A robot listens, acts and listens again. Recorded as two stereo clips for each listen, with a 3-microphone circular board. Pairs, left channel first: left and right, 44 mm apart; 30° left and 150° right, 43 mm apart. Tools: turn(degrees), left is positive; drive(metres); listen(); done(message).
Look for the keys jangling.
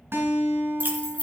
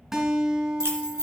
turn(degrees=140)
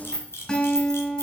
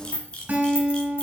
turn(degrees=15)
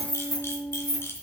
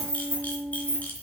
turn(degrees=10)
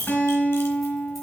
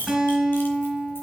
listen()
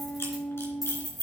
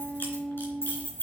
done("Found it: keys jangling, straight ahead.")